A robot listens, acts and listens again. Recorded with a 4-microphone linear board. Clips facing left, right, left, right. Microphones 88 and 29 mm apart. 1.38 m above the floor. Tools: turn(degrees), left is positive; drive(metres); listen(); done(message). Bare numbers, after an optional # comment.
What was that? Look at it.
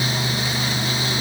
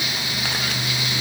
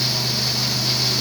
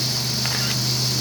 listen()
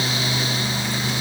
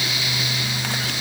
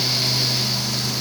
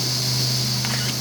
listen()
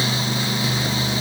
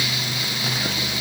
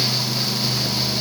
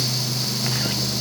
done("I can't make out anything to turn to.")